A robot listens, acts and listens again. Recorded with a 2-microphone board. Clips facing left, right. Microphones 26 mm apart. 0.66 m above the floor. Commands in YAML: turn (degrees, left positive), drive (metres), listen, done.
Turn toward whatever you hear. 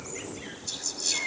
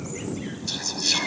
turn: -30
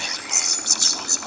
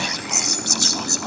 done: "Found it: whispering, straight ahead."